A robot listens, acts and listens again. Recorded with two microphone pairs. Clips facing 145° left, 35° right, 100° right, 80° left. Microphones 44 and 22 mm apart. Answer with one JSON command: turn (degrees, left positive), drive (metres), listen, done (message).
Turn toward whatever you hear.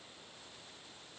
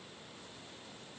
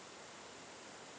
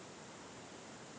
{"listen": true}
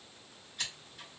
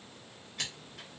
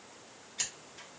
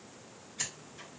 {"turn": -40}
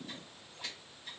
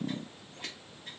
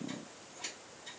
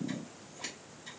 {"done": "Found it: scissors, straight ahead, 1 to 2 m away."}